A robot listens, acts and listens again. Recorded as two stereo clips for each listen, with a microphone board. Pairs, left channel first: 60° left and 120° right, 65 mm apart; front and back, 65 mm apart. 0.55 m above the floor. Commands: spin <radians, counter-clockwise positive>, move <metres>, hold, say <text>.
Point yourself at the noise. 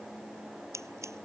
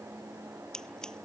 spin -1.40
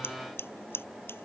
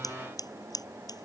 say Found it: scissors, straight ahead.